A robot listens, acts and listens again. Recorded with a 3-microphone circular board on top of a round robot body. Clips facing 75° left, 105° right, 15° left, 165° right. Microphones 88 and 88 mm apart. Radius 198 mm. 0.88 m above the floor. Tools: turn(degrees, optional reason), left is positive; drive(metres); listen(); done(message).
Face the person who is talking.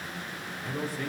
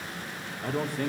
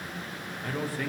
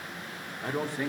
turn(degrees=-100, reason="The man speaking: 100° right.")
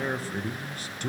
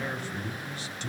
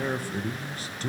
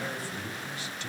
turn(degrees=55, reason="The man speaking is now 55° left.")
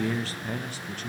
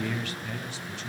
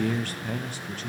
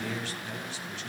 turn(degrees=45, reason="The man speaking is now 45° left.")
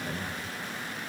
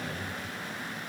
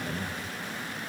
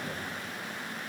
listen()
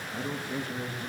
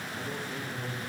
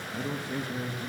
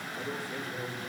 turn(degrees=45, reason="The man speaking is now 45° left.")
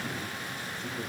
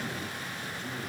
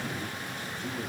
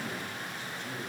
turn(degrees=-10, reason="The man speaking is now 10° right.")
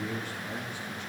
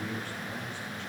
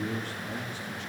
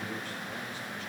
done("Found it: a man speaking, straight ahead, 2 to 4 m away.")